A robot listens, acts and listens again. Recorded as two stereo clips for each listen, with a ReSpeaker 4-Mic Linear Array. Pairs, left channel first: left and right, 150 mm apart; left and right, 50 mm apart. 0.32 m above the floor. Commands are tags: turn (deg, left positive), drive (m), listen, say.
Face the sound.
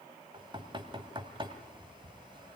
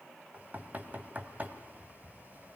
<turn deg="-30"/>
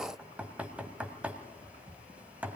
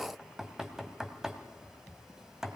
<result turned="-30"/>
<turn deg="-10"/>
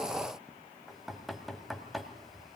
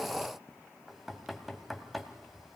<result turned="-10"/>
<say>Found it: knocking, straight ahead.</say>